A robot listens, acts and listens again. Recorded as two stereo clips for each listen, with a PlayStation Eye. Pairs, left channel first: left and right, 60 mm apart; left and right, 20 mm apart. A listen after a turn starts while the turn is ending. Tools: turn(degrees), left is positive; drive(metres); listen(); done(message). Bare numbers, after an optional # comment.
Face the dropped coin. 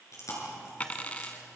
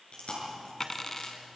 # The dropped coin: about 25° left or 155° left.
turn(25)
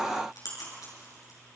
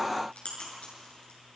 listen()
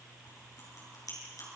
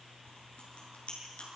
done("I heard a dropped coin, but can't make it out now. It was about straight ahead or 130° left.")